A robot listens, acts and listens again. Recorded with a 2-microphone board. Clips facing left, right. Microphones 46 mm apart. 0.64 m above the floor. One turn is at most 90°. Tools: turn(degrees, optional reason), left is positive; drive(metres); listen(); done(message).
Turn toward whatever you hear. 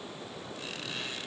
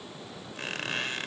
turn(degrees=-55, reason="The squeak: about 55° right or 125° right.")
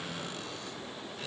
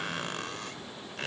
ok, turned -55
turn(degrees=-70, reason="So it is at 70° right.")
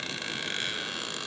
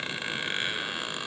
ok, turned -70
turn(degrees=-20, reason="The squeak is now 20° right.")
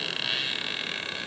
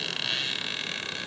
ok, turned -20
done("Facing the squeak, 1 to 2 m away.")